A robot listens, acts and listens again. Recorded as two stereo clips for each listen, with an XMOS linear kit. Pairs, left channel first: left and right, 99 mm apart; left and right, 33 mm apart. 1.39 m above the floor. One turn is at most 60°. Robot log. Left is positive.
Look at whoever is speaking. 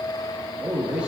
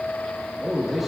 cmd yaw -30
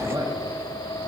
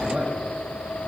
cmd idle
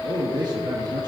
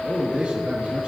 note: So it is at 135° right.
cmd yaw -60
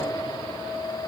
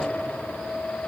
note: Nothing new. It was at 75° right.
cmd yaw -60
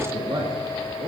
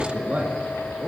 note: The man speaking is now 50° right.
cmd yaw -50
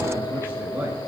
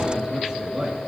note: The man speaking is now 20° right.
cmd yaw -20
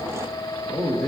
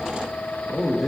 end: Facing the man speaking, 1 to 2 m away.